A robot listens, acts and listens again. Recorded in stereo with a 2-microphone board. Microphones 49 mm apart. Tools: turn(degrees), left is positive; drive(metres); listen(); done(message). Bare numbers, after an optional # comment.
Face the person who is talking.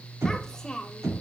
turn(30)
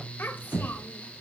# So it is at 135° left.
turn(135)
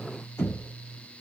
listen()
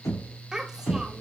# The child speaking is now 10° right.
turn(-10)
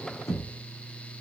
listen()
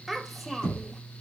done("Facing the child speaking, 1 to 2 m away.")